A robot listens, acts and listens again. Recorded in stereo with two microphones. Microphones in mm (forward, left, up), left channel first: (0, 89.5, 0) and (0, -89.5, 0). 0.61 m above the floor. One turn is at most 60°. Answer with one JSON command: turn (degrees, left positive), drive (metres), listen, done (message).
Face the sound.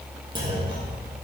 {"turn": -25}
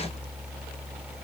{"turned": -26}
{"listen": true}
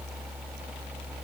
{"done": "I heard a clunk, but can't make it out now. It was about straight ahead or 130° right."}